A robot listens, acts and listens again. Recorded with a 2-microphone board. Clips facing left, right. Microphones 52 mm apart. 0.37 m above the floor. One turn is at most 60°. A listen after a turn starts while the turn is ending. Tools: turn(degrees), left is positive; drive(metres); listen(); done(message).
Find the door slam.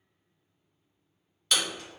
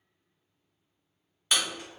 turn(degrees=-15)
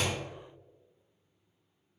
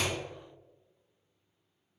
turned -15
listen()
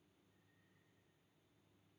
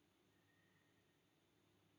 done("I heard a door slam, but can't make it out now. It was about straight ahead or 150° right.")